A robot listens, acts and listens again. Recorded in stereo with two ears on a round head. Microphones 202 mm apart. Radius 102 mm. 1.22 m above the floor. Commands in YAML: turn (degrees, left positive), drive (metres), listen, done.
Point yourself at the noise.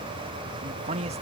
turn: -30
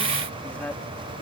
done: "Facing the man speaking."